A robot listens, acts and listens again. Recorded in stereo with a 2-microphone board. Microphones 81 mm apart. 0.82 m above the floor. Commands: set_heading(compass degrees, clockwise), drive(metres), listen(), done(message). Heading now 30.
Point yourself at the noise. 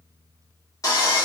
set_heading(345)
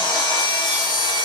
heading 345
set_heading(260)
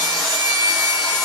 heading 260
done("Facing the sawing.")